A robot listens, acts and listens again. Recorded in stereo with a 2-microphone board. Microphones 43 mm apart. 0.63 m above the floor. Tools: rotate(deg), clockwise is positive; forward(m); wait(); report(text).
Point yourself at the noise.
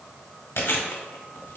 rotate(-65)
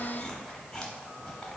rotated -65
report("Found it: chewing, straight ahead.")